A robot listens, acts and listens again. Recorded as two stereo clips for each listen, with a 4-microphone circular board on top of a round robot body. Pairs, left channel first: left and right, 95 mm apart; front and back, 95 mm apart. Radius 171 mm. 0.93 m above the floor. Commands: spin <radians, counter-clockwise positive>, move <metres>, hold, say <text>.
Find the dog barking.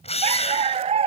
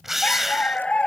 spin -1.40
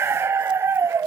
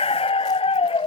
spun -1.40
spin -0.44
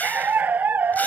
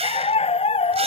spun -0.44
spin -0.35
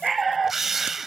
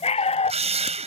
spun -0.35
say Found it: a dog barking, straight ahead.